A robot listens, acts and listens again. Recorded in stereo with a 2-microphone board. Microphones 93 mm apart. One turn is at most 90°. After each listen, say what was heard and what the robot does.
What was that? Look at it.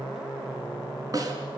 The snare drum: about 40° right or 140° right. Turn 40° right.
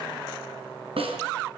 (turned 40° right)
So it is at 100° right. Turn 90° right.
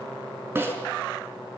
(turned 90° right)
The snare drum is now 25° right. Turn 25° right.
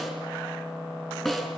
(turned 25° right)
Facing the snare drum, over 4 m away.